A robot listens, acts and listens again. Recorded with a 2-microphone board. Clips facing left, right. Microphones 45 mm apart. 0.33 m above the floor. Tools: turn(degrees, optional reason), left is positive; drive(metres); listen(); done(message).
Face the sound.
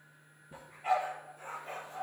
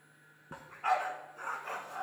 turn(degrees=-75, reason="The dog barking: about 75° right or 105° right.")
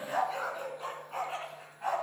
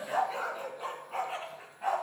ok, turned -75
done("Facing the dog barking.")